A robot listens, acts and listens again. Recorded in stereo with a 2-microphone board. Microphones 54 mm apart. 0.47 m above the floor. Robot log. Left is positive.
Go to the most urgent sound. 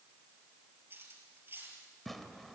cmd idle
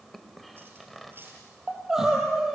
cmd yaw -30
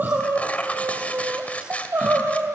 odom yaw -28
note: So it is at 145° right.
cmd yaw -145
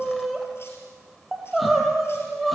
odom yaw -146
cmd fwd 1.0
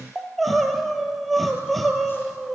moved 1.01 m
cmd fwd 1.0
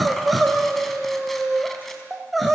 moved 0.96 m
cmd fwd 1.0
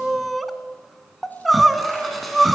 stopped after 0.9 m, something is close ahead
end: I am next to the crying.